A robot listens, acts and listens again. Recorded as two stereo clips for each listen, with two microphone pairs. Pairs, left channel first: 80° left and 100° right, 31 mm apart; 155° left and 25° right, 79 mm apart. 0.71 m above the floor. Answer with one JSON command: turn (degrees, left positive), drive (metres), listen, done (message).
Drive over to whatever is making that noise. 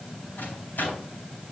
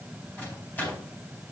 {"turn": 85}
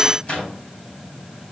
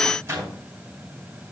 {"turn": 30}
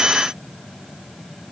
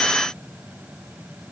{"listen": true}
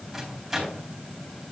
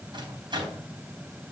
{"turn": -10}
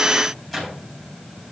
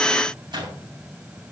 {"drive": 1.0}
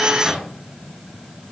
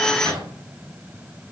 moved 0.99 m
{"turn": -10}
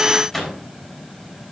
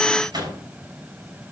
{"drive": 1.0}
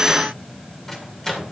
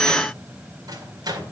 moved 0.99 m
{"drive": 1.0}
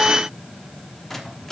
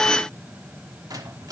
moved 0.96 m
{"drive": 1.0}
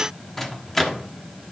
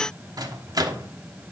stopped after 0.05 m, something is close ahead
{"done": "Arrived at the microwave, straight ahead."}